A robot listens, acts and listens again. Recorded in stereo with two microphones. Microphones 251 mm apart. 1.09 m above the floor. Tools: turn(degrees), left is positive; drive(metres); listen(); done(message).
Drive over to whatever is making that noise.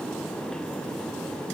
listen()
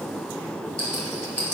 turn(degrees=90)
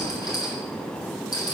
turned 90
turn(degrees=15)
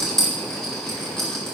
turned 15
drive(metres=1.0)
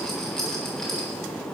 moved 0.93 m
drive(metres=1.0)
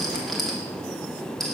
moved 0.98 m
drive(metres=1.0)
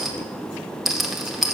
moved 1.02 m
drive(metres=1.0)
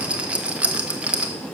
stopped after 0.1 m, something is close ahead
done("I am next to the rattle.")